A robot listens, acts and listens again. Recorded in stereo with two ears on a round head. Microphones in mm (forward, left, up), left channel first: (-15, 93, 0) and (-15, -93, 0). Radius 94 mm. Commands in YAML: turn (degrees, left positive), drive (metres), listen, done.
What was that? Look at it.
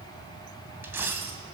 turn: -30
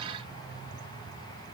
listen: true
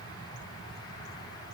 done: "I heard a dropped coin, but can't make it out now. It was about 20° left or 140° right."